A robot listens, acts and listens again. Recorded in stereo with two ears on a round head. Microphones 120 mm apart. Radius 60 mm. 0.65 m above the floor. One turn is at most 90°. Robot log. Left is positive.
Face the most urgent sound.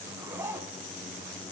cmd idle
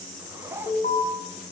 note: The alarm: about 55° left or 125° left.
cmd yaw +55
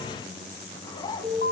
note: So it is at 70° left.
cmd yaw +70
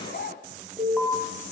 end: Found it: an alarm, straight ahead, over 4 m away.